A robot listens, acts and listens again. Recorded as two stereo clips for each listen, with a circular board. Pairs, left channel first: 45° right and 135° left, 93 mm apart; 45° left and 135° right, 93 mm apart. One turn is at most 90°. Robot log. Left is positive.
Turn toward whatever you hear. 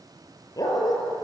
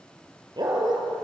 note: The dog barking: 95° right.
cmd yaw -90
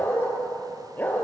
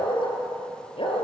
note: The dog barking is now 25° left.
cmd yaw +25
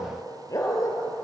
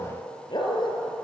note: The dog barking is now 10° left.
cmd yaw +10
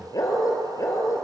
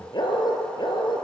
note: The dog barking is now 10° left.
cmd yaw +10
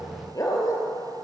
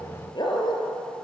note: The dog barking is now 10° left.
cmd yaw +10
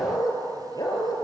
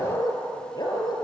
end: Found it: a dog barking, straight ahead.